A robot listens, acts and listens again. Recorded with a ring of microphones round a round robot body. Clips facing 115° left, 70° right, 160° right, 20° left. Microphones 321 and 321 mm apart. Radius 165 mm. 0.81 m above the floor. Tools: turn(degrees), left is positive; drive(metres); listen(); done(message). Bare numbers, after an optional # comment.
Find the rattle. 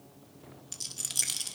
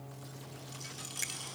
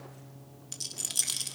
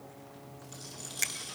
# The rattle: 165° left.
turn(165)
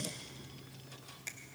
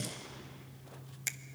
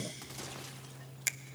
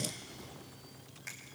listen()
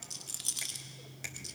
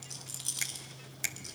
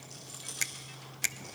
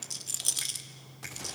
# The rattle is now 25° left.
turn(25)
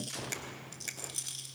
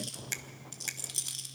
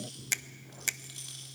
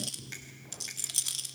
done("Found it: a rattle, straight ahead.")